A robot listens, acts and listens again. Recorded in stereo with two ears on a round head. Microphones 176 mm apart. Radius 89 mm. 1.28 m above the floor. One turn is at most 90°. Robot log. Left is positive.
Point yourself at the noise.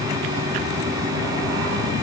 cmd idle
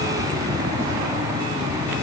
cmd idle
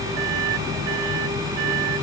end: I can't make out anything.